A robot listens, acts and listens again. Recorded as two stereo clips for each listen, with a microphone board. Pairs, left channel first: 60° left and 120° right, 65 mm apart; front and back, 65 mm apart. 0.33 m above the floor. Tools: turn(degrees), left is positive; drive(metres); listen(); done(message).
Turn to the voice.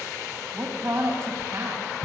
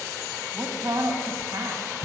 turn(degrees=-155)
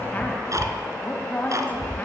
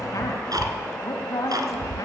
done("Found it: a woman speaking, straight ahead.")